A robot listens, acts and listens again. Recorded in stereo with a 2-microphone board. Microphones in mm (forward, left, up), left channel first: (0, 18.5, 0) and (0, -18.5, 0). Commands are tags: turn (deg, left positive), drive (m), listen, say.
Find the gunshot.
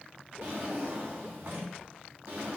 <listen/>
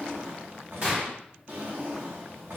<turn deg="-40"/>
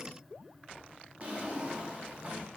<listen/>
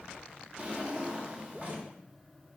<say>I heard a gunshot, but can't make it out now. It was about straight ahead or 100° right.</say>